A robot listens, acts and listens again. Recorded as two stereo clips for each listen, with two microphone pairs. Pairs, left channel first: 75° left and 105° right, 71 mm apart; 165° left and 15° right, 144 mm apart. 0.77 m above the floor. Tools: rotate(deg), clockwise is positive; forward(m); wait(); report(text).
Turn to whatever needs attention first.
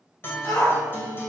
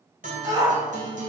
rotate(-50)
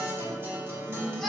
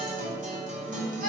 wait()
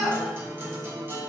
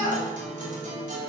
rotate(10)
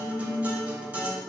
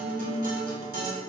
wait()
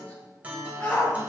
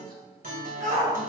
report("Found it: a shout, straight ahead, 2 to 4 m away.")